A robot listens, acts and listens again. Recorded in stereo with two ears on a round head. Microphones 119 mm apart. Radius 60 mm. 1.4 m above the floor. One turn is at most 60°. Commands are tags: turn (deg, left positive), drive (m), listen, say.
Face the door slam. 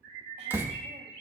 <turn deg="-15"/>
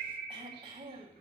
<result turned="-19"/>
<listen/>
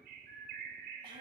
<say>I heard a door slam, but can't make it out now. It was about 5° left or 145° right.</say>